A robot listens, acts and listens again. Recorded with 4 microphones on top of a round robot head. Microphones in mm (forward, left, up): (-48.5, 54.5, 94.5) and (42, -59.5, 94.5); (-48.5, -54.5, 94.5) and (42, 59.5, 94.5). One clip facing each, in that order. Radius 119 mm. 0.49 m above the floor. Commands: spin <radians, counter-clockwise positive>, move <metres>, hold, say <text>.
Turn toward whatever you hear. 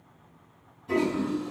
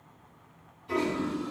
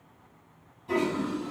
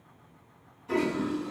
spin 2.97
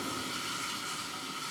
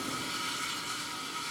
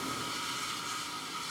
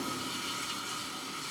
spin 1.48
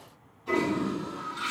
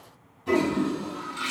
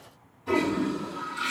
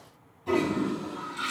spin -0.26
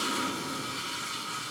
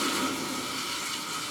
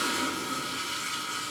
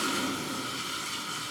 say Found it: a toilet flushing, straight ahead.